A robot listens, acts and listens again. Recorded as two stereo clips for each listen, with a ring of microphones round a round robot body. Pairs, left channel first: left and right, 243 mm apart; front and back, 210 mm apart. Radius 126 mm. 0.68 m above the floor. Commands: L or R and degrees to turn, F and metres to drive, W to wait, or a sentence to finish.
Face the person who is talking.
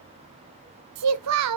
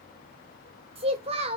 R110
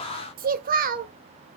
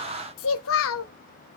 R35
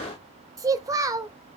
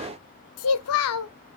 R15
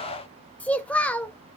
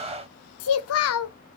Facing the child speaking, 1 to 2 m away.